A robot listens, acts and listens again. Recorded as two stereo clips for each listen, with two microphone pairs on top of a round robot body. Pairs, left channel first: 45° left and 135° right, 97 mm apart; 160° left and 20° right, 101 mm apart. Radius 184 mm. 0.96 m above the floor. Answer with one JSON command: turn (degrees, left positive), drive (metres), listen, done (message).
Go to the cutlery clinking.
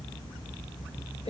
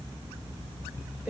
{"listen": true}
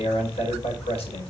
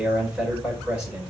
{"listen": true}
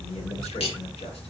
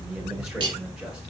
{"turn": 25}
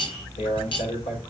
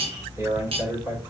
{"turn": 10}
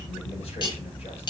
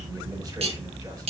{"drive": 1.0}
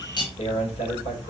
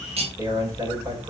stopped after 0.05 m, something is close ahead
{"done": "Blocked. The cutlery clinking is further on, straight ahead."}